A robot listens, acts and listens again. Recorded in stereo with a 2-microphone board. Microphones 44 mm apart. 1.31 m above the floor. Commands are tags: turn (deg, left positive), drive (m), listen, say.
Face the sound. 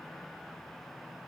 <listen/>
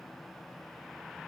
<listen/>
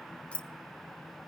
<turn deg="25"/>
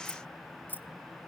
<turn deg="125"/>
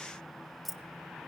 <say>Found it: keys jangling, straight ahead.</say>